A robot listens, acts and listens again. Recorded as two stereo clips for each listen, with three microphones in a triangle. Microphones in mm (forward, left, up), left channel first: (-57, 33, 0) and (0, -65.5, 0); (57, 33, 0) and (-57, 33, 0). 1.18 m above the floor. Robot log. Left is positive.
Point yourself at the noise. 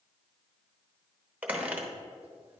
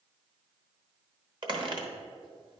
note: The squeak: 135° right.
cmd yaw -135
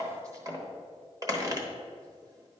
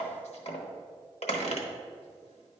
end: Found it: a squeak, straight ahead, 1 to 2 m away.